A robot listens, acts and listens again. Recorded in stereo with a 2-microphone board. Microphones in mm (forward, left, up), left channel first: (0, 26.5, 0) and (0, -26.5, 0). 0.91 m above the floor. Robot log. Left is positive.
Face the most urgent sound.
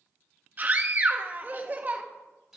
note: The scream: about 35° right or 145° right.
cmd yaw -35
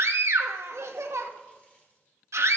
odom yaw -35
note: So it is at 105° right.
cmd yaw -105
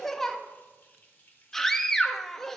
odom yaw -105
end: Facing the scream, 1 to 2 m away.